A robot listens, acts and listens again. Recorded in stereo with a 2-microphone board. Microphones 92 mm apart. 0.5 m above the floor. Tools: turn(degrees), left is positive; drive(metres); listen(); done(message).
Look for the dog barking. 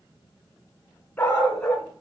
turn(degrees=30)
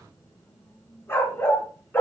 turn(degrees=20)
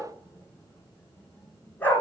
turn(degrees=20)
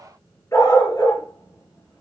turn(degrees=145)
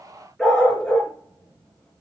done("Facing the dog barking, 2 to 4 m away.")